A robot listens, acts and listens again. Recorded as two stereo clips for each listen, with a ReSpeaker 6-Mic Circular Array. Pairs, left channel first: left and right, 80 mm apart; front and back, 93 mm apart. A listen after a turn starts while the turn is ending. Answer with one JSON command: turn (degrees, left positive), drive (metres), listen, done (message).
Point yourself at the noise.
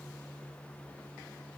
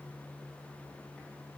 {"listen": true}
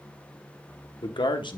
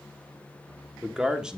{"turn": 100}
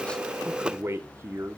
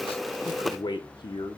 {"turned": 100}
{"turn": -35}
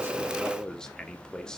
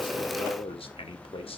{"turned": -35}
{"turn": 10}
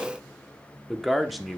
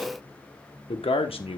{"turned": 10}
{"done": "Facing the man speaking."}